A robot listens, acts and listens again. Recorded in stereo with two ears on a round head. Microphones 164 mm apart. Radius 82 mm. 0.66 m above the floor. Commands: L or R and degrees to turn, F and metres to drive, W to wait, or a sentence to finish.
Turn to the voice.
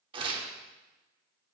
W
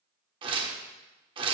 W
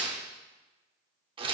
I can't make out anyone speaking to turn to.